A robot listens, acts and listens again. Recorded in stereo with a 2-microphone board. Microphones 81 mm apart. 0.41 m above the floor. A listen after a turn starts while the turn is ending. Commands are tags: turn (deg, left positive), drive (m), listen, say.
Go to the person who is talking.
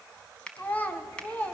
<turn deg="20"/>
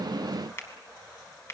<listen/>
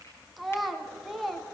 <drive m="1.0"/>
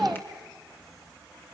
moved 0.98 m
<drive m="1.0"/>
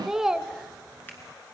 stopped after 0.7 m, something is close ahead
<turn deg="-10"/>
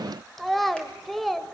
<say>I am next to the child speaking.</say>